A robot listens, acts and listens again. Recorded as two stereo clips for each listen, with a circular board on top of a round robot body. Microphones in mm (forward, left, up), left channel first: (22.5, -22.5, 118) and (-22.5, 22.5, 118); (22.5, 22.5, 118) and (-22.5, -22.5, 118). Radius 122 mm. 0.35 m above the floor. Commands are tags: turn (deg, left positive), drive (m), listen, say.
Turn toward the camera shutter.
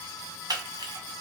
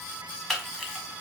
<turn deg="135"/>
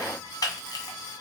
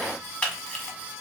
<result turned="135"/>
<turn deg="-25"/>
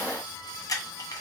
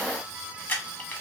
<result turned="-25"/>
<turn deg="-15"/>
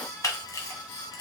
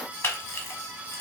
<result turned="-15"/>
<say>Found it: a camera shutter, straight ahead, 1 to 2 m away.</say>